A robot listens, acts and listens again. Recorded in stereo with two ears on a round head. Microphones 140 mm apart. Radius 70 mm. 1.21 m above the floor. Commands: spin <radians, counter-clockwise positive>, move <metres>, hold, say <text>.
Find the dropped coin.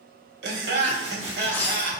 spin 0.52
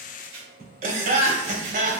hold
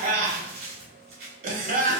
say I heard a dropped coin, but can't make it out now. It was about 15° right or 135° left.